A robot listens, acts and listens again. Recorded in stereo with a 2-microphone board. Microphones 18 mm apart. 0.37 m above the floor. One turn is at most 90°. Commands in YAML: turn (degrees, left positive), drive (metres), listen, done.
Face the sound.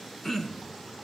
turn: 25
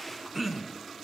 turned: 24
done: "Facing the throat clearing, 2 to 4 m away."